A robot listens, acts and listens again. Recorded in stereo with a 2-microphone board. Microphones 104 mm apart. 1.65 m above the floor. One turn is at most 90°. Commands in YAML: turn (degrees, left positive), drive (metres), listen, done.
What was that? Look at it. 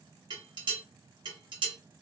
turn: -50
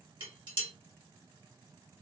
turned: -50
turn: -70
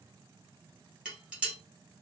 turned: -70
turn: -10
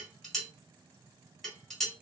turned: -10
done: "Facing the dishes clattering, 1 to 2 m away."